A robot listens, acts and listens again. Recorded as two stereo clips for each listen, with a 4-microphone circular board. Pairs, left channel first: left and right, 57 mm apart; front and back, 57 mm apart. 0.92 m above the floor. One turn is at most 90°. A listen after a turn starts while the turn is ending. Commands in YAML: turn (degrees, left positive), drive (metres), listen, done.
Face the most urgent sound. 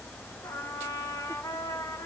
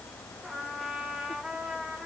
listen: true
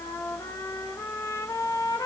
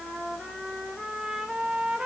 listen: true
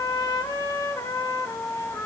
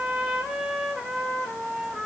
done: "I can't make out anything urgent, only a trumpet."